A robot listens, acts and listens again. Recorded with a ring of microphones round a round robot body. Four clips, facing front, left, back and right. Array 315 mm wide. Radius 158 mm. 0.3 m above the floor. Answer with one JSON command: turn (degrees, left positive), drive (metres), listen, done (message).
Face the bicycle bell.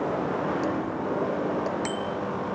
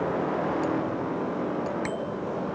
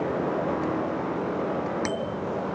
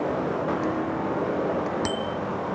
{"turn": -95}
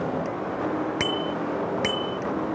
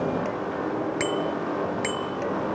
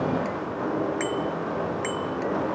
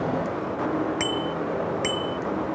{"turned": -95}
{"done": "Found it: a bicycle bell, straight ahead."}